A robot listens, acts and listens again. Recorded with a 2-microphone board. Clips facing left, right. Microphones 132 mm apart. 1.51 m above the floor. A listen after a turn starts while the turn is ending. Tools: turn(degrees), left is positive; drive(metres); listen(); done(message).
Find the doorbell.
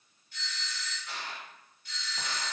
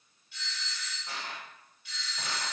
turn(degrees=40)
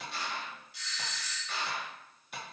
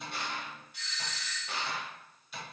turn(degrees=100)
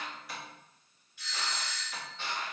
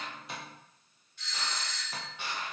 turn(degrees=10)
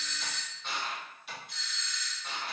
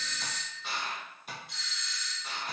done("Facing the doorbell, 1 to 2 m away.")